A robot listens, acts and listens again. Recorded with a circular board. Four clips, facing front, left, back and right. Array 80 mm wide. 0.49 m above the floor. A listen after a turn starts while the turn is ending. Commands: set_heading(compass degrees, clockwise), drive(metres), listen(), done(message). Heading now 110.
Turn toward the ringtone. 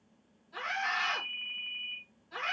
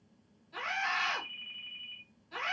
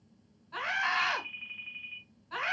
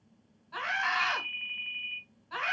set_heading(195)
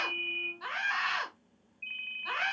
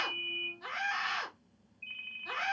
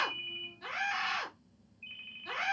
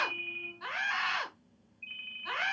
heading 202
set_heading(192)
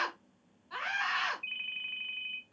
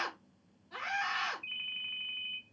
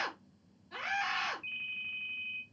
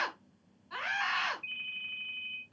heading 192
done("Facing the ringtone, 2 to 4 m away.")